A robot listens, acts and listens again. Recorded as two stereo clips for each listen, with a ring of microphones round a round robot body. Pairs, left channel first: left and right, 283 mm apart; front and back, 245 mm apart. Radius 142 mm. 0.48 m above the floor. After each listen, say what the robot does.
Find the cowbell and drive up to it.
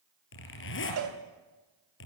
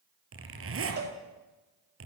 Turn 125° right.
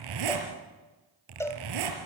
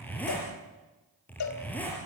Turn 10° left.
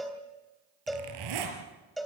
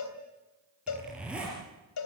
Drive 1.0 m forward.
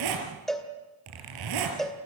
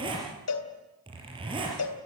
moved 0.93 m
Drive 1.0 m forward.
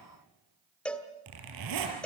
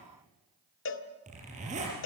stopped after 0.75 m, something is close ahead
Arrived at the cowbell, straight ahead.